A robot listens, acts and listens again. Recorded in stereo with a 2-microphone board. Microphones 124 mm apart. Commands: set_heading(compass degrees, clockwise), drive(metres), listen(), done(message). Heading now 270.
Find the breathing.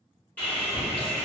listen()
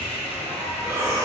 set_heading(295)
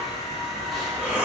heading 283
set_heading(293)
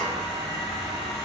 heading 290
listen()
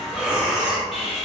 done("Facing the breathing.")